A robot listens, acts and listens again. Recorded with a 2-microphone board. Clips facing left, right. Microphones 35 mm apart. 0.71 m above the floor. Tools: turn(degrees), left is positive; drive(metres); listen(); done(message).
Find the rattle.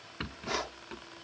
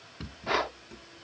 turn(degrees=40)
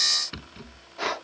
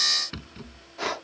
done("Found it: a rattle, straight ahead.")